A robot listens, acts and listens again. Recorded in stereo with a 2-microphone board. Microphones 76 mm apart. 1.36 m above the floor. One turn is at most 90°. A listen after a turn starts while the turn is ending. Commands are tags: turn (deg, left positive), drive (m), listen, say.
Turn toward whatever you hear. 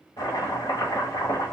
<turn deg="60"/>
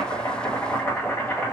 <turn deg="30"/>
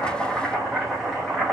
<say>Found it: chopping, straight ahead.</say>